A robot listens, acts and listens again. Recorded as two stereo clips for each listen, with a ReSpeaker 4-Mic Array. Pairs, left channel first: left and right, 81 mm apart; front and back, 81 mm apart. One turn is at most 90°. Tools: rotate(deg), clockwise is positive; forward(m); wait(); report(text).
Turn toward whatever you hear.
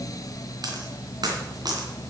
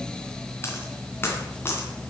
rotate(60)
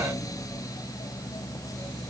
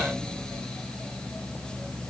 report("I heard a dropped coin from this way, but can't make it out now.")